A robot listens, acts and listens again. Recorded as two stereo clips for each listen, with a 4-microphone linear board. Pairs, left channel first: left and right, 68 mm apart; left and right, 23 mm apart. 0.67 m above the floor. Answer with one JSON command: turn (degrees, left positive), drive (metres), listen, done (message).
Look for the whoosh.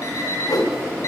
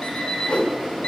{"turn": 75}
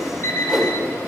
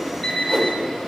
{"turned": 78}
{"done": "Facing the whoosh, under 1 m away."}